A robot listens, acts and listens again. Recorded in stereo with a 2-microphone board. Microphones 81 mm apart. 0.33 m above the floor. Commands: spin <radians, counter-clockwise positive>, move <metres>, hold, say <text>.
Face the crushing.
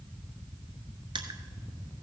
spin -1.31
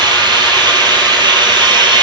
hold
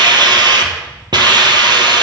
hold
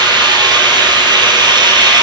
say I heard crushing, but can't make it out now. It was about straight ahead or 30° right.